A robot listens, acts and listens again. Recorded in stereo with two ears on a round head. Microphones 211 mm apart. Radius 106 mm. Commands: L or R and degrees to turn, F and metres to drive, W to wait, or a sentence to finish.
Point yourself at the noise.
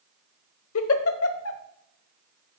L60
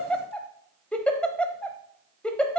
Facing the giggle, under 1 m away.